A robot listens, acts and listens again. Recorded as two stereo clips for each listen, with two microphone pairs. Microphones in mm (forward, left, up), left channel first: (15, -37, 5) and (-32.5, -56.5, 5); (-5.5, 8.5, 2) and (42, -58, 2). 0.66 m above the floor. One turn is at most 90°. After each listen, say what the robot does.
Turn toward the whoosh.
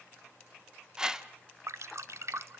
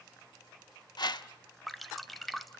Turn 90° left.
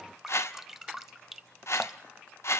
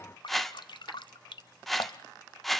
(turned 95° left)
Turn 35° left.
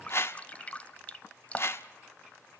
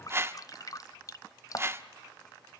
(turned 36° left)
Facing the whoosh, 1 to 2 m away.